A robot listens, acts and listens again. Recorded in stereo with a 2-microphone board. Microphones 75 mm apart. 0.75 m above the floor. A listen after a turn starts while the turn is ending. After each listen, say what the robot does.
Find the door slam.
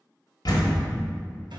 Turn 65° left.
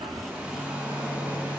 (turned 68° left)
Keep listening.
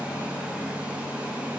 I heard a door slam, but can't make it out now. It was about 5° right or 50° left.